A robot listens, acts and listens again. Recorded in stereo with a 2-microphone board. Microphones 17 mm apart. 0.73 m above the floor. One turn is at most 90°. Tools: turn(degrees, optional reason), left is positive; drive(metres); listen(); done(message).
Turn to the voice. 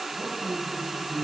turn(degrees=-75, reason="The man speaking: about 75° right or 105° right.")
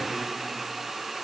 listen()
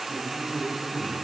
turn(degrees=-30, reason="So it is at 30° right.")
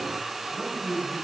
turn(degrees=10, reason="The man speaking is now 10° left.")
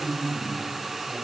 done("Facing the man speaking.")